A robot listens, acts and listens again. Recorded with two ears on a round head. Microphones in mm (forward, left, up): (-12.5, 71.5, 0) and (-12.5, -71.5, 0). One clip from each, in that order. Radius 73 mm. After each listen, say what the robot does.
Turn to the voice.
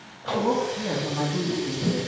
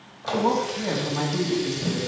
Turn 50° right.
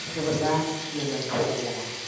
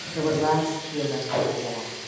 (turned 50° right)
Turn 80° right.
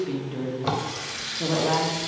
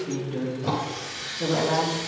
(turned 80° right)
Turn 25° left.
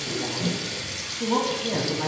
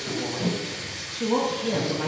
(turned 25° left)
Found it: a woman speaking, straight ahead.